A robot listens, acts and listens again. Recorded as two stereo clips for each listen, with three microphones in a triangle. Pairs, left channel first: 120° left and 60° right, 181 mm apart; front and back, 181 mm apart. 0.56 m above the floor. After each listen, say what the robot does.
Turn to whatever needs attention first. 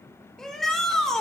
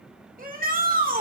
Turn 155° right.
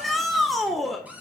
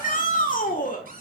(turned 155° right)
Turn 30° left.
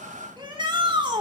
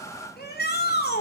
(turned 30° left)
Found it: a shout, straight ahead, 1 to 2 m away.